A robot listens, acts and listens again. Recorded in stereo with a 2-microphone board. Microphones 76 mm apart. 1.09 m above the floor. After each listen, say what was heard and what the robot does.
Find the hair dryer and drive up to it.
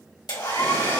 The hair dryer: about 75° left or 105° left. Turn 75° left.
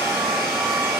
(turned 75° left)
So it is at 10° left. Turn 10° left.
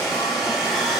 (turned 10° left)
Drive 1.0 m forward.
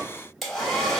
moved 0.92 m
Drive 1.0 m forward.
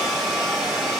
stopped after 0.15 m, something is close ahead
Arrived at the hair dryer, straight ahead.